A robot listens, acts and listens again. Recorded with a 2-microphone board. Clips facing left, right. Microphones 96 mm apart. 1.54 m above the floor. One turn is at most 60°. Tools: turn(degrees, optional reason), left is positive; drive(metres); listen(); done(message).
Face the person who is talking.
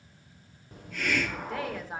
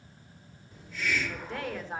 turn(degrees=30)
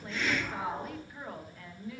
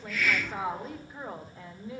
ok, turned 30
turn(degrees=-25, reason="So it is at 25° right.")
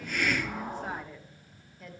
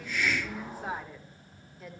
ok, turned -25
done("Found it: a woman speaking, straight ahead.")